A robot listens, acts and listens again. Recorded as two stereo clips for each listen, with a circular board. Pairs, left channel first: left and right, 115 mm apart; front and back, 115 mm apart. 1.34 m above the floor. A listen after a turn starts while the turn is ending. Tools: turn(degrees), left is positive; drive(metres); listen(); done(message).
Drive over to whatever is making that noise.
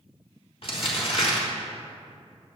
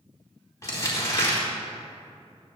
turn(degrees=60)
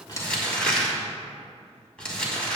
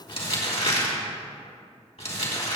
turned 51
turn(degrees=10)
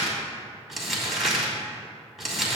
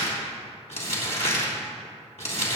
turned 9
drive(metres=1.0)
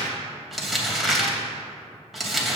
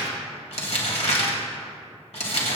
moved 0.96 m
drive(metres=1.0)
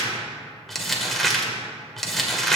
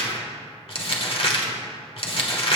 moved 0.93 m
drive(metres=1.0)
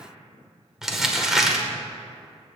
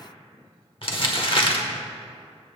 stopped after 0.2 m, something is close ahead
done("Arrived at the crumpling, straight ahead.")